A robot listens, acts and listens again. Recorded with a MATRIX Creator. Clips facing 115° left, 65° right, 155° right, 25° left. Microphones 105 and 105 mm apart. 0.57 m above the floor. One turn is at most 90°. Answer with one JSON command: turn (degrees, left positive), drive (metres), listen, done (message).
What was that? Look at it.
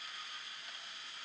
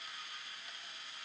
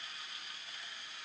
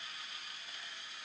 {"listen": true}
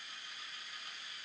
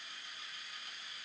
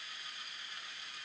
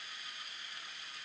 {"listen": true}
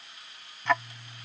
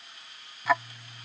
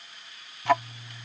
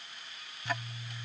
{"turn": -90}
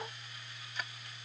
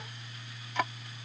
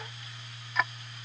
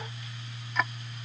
{"turn": -70}
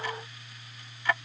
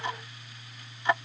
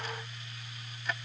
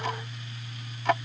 {"done": "Found it: ticking, straight ahead."}